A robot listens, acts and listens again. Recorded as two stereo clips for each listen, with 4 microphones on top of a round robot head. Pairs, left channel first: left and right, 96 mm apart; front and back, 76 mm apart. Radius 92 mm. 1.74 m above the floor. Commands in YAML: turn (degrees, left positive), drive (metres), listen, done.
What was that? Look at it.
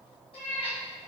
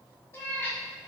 turn: 60
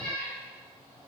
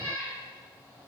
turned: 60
turn: 30
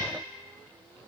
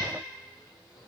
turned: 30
listen: true
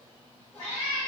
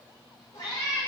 turn: 25
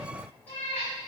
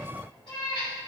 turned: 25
turn: 15
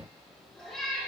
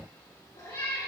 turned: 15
done: "Facing the cat meowing."